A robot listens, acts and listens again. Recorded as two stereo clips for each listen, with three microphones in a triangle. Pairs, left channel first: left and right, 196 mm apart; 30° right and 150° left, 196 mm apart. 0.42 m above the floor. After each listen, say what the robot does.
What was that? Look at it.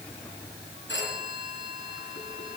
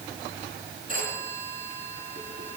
Turn 105° left.
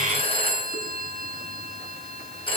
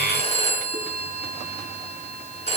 Turn 25° left.
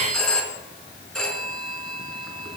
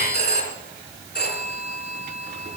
Found it: a phone ringing, straight ahead.